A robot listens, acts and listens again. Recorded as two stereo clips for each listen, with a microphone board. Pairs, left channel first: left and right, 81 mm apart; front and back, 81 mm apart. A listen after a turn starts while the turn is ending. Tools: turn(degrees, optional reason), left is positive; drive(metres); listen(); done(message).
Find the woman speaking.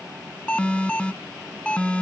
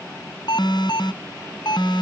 listen()
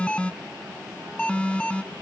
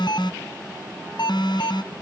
listen()
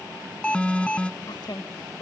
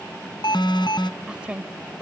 turn(degrees=105, reason="The woman speaking: 105° left.")
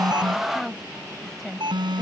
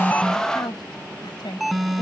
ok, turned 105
done("Facing the woman speaking.")